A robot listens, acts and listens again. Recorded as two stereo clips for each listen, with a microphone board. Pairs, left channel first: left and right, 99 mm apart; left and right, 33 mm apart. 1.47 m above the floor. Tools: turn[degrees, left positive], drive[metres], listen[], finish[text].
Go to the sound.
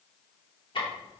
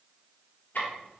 Thought: The ticking: about 55° left or 125° left.
Action: turn[55]
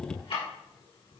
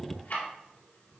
Thought: So it is at 70° left.
Action: turn[70]
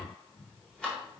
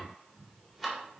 Thought: The ticking is now 10° left.
Action: turn[10]
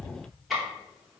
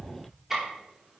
Action: drive[1.0]
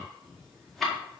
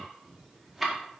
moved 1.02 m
Action: drive[1.0]
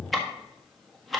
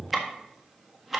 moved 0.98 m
Action: drive[1.0]
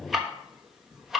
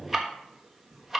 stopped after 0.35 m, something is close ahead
Action: finish[I am next to the ticking.]